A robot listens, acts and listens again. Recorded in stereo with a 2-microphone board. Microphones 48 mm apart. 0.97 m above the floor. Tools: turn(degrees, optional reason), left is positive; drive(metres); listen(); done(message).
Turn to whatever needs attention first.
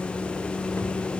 listen()
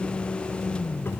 listen()
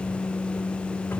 done("I can't make out anything urgent.")